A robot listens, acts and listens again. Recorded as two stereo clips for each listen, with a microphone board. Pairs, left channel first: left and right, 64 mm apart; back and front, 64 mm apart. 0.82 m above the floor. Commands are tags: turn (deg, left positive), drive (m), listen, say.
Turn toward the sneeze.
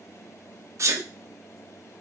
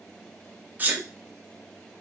<turn deg="-60"/>
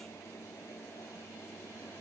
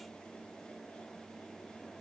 <say>I heard a sneeze from this way, but can't make it out now.</say>